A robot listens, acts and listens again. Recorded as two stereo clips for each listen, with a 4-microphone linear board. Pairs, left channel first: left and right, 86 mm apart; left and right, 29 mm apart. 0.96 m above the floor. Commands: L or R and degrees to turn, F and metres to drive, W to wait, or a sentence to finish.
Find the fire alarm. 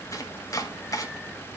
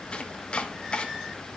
W
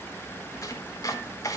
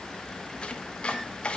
W
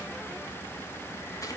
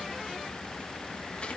I can't make out a fire alarm, only chopping.